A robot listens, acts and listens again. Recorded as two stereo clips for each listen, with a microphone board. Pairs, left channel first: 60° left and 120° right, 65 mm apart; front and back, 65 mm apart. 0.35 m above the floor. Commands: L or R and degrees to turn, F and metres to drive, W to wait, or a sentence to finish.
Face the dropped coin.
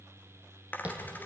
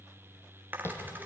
L120
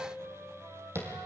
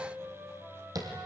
Facing where the dropped coin came from. I can't hear it now.